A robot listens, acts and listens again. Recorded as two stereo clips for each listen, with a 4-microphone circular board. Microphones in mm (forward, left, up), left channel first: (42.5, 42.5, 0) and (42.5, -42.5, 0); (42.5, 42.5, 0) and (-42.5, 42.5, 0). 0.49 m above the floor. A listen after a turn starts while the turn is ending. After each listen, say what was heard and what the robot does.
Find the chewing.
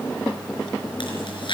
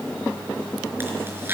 Keep listening.
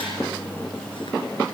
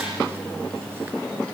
Keep listening.
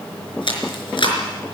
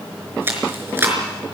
The chewing: 115° left. Turn 115° left.
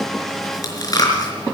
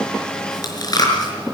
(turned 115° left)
The chewing is now 45° left. Turn 45° left.
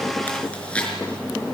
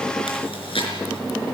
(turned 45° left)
The chewing is now 10° left. Turn 10° left.
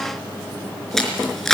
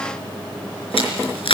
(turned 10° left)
Found it: chewing, straight ahead, over 4 m away.